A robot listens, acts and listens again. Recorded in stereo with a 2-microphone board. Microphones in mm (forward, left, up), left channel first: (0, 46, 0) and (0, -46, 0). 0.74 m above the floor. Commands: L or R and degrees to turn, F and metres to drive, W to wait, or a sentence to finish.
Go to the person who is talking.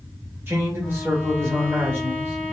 R25
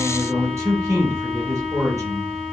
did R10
R35
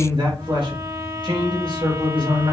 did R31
R115
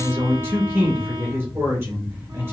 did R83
R30
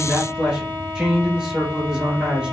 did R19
R15
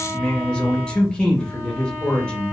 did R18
L10
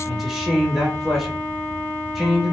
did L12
F1.0
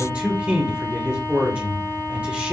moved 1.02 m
R20
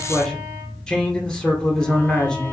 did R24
F1.0
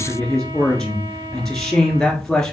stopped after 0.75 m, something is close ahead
I am next to the man speaking.